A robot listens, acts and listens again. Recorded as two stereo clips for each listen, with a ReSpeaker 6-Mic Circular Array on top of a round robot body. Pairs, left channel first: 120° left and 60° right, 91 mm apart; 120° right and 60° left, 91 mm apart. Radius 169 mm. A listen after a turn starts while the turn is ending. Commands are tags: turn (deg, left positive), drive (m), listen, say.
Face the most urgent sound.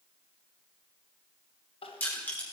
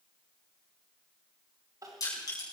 <turn deg="115"/>
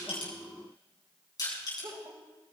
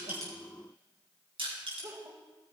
<say>Found it: crying, straight ahead, 1 to 2 m away.</say>